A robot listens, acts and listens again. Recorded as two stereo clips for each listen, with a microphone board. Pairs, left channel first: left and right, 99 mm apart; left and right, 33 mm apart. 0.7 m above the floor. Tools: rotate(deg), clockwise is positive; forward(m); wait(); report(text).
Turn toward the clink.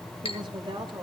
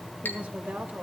rotate(-75)
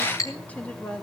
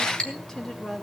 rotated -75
rotate(-35)
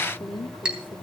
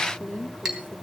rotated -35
rotate(10)
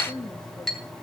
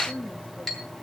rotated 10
report("Found it: a clink, straight ahead, 2 to 4 m away.")